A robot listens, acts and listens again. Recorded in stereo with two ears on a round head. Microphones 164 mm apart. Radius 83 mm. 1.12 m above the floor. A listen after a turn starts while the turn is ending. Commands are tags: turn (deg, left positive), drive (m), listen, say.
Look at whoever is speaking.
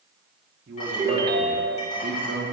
<turn deg="-60"/>
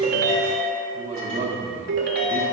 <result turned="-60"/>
<turn deg="-40"/>
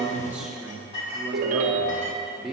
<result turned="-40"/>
<say>Found it: a man speaking, straight ahead, 1 to 2 m away.</say>